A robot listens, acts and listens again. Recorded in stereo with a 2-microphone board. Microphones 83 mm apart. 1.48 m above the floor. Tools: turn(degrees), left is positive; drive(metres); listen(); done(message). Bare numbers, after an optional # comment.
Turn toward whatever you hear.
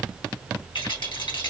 # The rattle: about 70° left or 110° left.
turn(70)
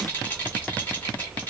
listen()
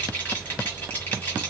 # So it is at 20° left.
turn(20)
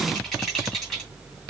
done("Facing the rattle.")